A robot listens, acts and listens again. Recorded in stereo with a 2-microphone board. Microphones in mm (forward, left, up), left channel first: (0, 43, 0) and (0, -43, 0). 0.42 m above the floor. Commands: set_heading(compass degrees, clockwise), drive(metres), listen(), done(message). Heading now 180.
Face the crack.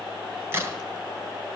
set_heading(210)
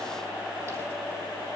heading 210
listen()
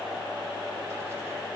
done("I heard a crack, but can't make it out now. It was about straight ahead or 120° right.")